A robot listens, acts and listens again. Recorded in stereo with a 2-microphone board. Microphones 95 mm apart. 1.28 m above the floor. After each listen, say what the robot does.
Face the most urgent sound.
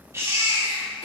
Turn 30° right.
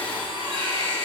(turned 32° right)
Turn 115° right.
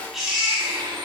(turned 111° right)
Found it: a baby crying, straight ahead, 2 to 4 m away.